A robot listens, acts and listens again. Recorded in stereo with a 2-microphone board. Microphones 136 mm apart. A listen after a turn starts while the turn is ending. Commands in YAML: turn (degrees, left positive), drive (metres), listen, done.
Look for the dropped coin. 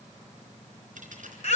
turn: -70
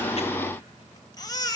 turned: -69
listen: true
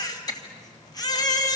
done: "I heard a dropped coin, but can't make it out now. It was about straight ahead or 40° right."